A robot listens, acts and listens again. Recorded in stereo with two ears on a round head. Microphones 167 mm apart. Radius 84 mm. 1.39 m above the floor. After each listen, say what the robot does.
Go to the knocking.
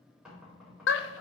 Turn 30° right.
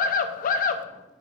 Keep listening.
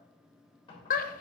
Turn 30° left.
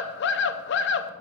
Keep listening.
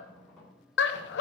Drive 1.0 m forward.
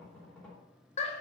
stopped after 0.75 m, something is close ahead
Something is in my way. I am facing the knocking but have not reached it.